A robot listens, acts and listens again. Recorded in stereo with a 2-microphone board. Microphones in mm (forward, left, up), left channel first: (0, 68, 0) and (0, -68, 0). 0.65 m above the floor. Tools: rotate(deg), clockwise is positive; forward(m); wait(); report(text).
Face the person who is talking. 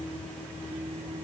wait()
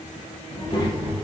rotate(-35)
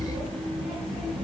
report("Found it: a child speaking, straight ahead.")